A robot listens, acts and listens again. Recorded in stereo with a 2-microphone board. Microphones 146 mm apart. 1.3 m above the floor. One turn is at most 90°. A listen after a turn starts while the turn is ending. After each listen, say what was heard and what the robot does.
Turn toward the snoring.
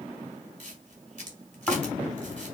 Turn 30° left.
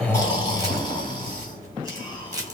So it is at 145° left. Turn 90° left.
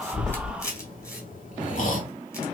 The snoring is now 95° left. Turn 90° left.
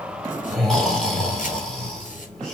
Facing the snoring.